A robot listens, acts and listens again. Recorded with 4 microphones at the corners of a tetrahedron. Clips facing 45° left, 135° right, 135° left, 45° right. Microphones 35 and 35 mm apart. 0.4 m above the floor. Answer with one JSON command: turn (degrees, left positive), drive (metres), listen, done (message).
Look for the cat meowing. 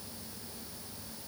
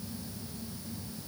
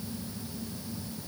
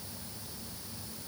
{"listen": true}
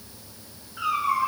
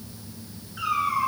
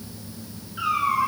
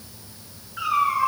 {"turn": -25}
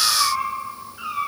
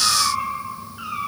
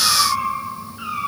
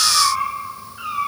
{"done": "Facing the cat meowing, 2 to 4 m away."}